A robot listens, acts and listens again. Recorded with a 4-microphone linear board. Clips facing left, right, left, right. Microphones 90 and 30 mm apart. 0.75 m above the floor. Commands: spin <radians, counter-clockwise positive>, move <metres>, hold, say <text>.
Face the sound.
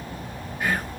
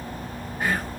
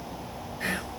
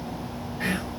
spin -0.61
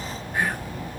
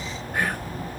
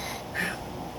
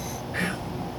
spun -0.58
spin -1.83
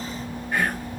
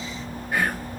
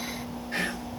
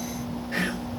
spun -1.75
say Facing the whispering.